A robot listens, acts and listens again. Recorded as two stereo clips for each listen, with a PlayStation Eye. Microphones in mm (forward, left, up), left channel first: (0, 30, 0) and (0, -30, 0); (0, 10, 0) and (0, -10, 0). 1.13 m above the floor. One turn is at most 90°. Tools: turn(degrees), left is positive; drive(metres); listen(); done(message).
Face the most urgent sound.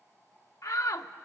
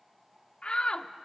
turn(degrees=60)
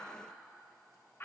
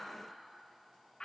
turn(degrees=40)
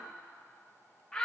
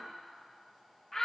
turn(degrees=10)
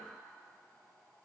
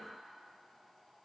listen()
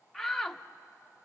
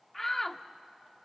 done("Found it: a shout, straight ahead.")